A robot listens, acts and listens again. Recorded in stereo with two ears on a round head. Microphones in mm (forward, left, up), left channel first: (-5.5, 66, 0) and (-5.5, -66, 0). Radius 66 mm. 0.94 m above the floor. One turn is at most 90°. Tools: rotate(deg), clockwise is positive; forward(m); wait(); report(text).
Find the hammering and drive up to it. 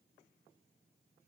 wait()
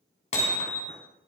rotate(-45)
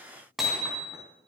forward(1.0)
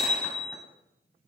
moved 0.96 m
forward(1.0)
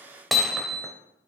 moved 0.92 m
forward(1.0)
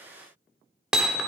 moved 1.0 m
forward(1.0)
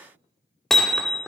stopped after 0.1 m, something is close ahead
report("I am next to the hammering.")